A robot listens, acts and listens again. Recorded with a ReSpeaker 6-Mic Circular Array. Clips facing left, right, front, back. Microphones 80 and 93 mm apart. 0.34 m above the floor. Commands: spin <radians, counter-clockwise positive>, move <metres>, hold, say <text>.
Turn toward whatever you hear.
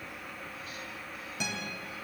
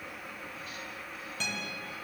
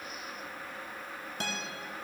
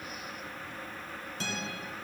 spin 0.17
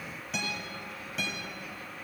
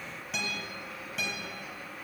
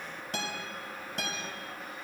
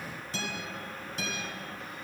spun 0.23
say Facing the guitar, 1 to 2 m away.